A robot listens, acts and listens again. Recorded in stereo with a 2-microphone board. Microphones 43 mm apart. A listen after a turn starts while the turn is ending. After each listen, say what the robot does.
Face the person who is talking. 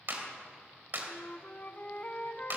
Keep listening.
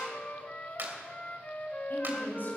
Turn 50° left.
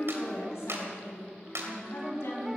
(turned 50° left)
Turn 80° left.
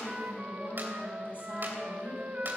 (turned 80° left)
Turn 50° left.
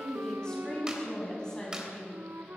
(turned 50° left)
Turn 15° left.
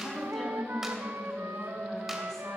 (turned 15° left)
Turn 10° left.
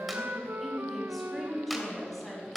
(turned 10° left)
Facing the woman speaking.